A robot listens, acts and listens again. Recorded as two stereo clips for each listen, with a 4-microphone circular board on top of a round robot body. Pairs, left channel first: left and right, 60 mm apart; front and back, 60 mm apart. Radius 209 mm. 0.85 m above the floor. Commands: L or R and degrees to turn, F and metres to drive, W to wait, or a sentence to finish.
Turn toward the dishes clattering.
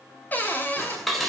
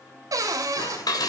Facing the dishes clattering.